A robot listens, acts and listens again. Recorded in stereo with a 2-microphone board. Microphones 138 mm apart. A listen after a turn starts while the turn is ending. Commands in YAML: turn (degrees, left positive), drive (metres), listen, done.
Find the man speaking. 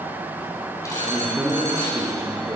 turn: -25
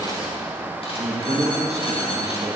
turn: -120
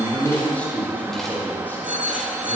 turn: 15
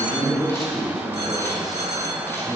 done: "Found it: a man speaking, straight ahead."